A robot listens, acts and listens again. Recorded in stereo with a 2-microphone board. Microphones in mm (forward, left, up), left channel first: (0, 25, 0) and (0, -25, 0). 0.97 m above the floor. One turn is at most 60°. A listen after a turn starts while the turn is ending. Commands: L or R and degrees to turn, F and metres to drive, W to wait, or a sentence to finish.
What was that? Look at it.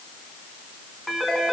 L30
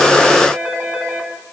R30
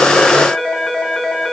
Facing the phone ringing, over 4 m away.